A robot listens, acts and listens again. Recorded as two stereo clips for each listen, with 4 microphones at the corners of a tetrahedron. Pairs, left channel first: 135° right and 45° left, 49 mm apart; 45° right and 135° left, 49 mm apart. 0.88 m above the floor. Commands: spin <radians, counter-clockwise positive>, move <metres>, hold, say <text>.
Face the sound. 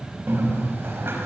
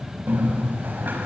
spin 1.48
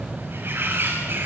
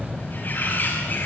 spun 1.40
say Found it: a bird, straight ahead.